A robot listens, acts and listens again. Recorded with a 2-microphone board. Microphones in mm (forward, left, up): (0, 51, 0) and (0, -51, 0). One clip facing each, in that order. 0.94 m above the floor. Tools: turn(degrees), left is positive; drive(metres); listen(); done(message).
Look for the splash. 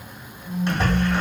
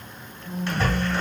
turn(degrees=20)
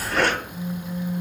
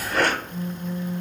done("Found it: a splash, straight ahead, 1 to 2 m away.")